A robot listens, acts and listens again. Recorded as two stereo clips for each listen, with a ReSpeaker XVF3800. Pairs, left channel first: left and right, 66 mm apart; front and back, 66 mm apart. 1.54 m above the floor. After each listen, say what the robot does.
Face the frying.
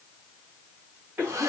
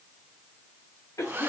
Keep listening.
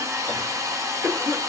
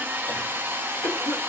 Keep listening.
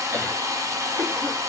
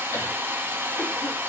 I can't make out frying to turn to.